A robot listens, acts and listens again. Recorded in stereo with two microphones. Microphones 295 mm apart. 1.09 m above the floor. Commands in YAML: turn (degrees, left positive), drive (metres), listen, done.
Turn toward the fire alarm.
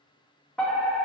turn: 30
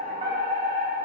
turn: -30
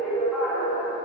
done: "Found it: a fire alarm, straight ahead, 2 to 4 m away."